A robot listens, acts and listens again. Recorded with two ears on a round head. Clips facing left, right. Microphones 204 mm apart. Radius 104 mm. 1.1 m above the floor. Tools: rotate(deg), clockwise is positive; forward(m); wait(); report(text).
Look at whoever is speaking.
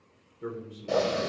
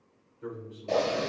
rotate(-55)
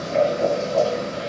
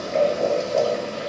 wait()
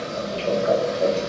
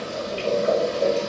wait()
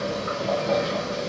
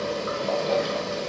report("I heard a man speaking, but can't make it out now. It was about straight ahead or 70° left.")